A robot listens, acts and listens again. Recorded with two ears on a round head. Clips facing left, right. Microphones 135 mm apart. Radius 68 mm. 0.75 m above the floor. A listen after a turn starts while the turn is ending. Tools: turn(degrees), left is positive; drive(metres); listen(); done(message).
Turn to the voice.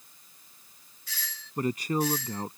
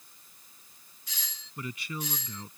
turn(degrees=40)
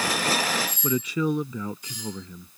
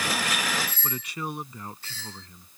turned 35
turn(degrees=105)
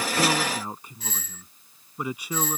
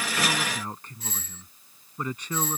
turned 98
turn(degrees=10)
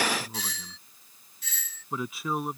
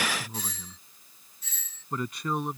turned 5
done("Facing the man speaking.")